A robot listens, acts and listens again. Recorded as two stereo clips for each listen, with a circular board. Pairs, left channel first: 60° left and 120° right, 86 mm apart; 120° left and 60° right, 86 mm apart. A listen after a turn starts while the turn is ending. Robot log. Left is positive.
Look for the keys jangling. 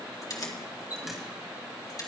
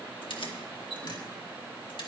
note: The keys jangling: 105° left.
cmd yaw +105
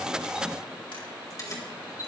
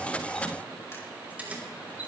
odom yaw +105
note: The keys jangling is now 10° left.
cmd yaw +10
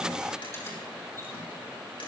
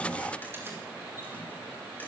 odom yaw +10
cmd idle
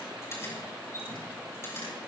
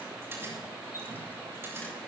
end: Found it: keys jangling, straight ahead.